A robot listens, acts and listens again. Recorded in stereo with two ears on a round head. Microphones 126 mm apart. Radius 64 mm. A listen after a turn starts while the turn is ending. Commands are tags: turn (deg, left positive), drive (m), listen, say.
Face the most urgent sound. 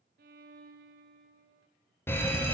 <turn deg="30"/>
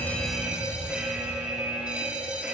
<turn deg="-10"/>
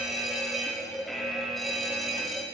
<say>Facing the fire alarm.</say>